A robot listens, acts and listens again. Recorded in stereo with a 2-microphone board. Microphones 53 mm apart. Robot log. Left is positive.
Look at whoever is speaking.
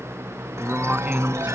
note: The man speaking: about 25° right or 155° right.
cmd yaw -25
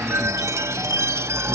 cmd idle
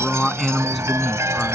end: Found it: a man speaking, straight ahead.